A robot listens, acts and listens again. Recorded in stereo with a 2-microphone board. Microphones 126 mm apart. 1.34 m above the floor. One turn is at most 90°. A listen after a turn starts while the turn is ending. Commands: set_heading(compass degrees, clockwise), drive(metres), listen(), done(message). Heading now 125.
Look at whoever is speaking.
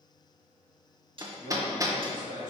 set_heading(215)
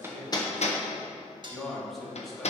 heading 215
done("Found it: a man speaking, straight ahead.")